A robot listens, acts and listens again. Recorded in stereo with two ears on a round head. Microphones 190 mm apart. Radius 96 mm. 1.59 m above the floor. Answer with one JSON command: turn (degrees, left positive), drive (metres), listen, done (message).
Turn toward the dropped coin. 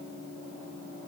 {"listen": true}
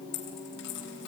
{"turn": 70}
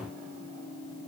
{"listen": true}
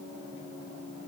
{"done": "I heard a dropped coin, but can't make it out now. It was about straight ahead or 40° left."}